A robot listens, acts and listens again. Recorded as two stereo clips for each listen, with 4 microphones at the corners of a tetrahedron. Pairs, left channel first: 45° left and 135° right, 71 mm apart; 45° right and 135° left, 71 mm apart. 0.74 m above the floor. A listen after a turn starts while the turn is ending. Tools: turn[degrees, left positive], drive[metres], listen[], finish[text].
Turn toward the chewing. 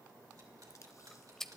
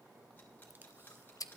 Thought: The chewing: 35° right.
Action: turn[-35]
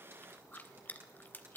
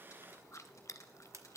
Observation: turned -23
Thought: The chewing is now 15° right.
Action: turn[-15]
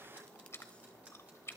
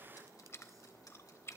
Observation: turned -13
Action: finish[Facing the chewing, under 1 m away.]